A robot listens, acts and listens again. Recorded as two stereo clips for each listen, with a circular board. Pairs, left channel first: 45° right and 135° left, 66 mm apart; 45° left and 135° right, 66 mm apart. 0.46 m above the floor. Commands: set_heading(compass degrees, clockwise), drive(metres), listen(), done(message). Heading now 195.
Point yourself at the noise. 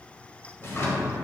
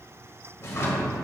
done("Found it: a drawer, straight ahead, 1 to 2 m away.")